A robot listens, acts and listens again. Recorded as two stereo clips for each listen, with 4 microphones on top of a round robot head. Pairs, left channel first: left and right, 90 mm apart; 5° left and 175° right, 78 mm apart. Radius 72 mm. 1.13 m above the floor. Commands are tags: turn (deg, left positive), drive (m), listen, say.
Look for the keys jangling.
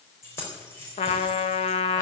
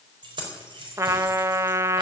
<turn deg="160"/>
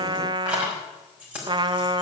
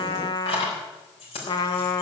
<turn deg="-15"/>
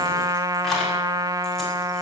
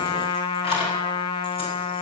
<listen/>
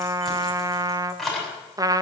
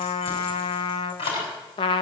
<say>Found it: keys jangling, straight ahead.</say>